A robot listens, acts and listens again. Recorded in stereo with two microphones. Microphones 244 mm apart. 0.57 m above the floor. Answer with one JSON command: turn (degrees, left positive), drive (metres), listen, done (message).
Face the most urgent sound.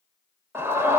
{"turn": -30}
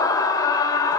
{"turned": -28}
{"turn": 15}
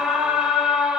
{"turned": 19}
{"done": "Found it: a scream, straight ahead, 2 to 4 m away."}